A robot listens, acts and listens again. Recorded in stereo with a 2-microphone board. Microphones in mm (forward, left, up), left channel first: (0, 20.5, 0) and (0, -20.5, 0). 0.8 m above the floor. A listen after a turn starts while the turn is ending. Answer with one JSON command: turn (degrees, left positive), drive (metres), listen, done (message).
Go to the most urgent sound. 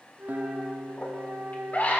{"turn": 45}
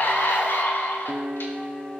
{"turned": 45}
{"turn": 85}
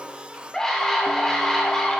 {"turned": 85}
{"turn": 15}
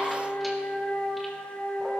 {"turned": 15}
{"listen": true}
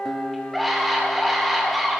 {"drive": 1.0}
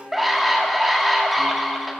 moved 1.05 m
{"drive": 1.0}
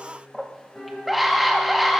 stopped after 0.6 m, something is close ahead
{"done": "I am next to the scream."}